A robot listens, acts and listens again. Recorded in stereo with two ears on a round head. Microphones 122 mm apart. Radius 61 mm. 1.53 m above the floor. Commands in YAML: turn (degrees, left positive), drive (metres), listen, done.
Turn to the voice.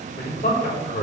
turn: 60
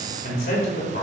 turn: 60
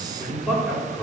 done: "Facing the man speaking, over 4 m away."